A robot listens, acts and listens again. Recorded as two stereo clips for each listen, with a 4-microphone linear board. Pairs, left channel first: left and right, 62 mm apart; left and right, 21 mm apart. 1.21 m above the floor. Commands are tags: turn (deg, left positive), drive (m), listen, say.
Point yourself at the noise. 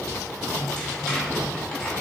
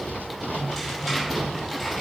<turn deg="30"/>
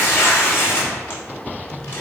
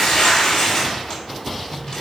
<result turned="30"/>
<turn deg="140"/>
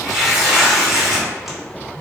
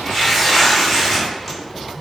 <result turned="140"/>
<say>Found it: tearing paper, straight ahead.</say>